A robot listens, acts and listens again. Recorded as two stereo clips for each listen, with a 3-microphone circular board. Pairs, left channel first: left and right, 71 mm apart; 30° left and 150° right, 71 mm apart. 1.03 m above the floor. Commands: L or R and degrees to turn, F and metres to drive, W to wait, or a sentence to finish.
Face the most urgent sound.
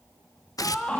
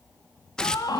L15
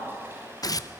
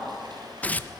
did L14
W
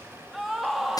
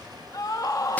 Found it: a scream, straight ahead, 1 to 2 m away.